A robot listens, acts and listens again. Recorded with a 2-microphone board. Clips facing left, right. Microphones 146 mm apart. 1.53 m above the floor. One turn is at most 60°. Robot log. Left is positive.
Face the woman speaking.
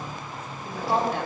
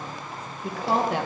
cmd yaw -60
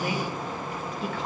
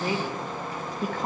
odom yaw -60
note: So it is at 45° right.
cmd yaw -45
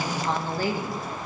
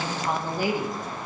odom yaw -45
note: The woman speaking is now 20° right.
cmd yaw -20
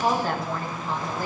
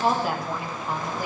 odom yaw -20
note: The woman speaking is now 15° right.
cmd yaw -15
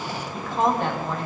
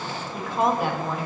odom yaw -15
end: Facing the woman speaking, 2 to 4 m away.